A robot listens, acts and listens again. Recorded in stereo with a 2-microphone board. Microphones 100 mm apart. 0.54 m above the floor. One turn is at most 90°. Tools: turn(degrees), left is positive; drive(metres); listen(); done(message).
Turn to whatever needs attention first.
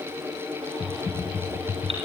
turn(degrees=-75)
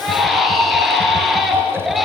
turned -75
done("Facing the baby crying, over 4 m away.")